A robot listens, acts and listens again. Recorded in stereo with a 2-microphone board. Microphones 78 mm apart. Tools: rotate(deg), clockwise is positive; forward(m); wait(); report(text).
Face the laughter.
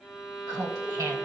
rotate(50)
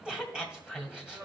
rotate(10)
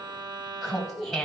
report("Facing the laughter, 2 to 4 m away.")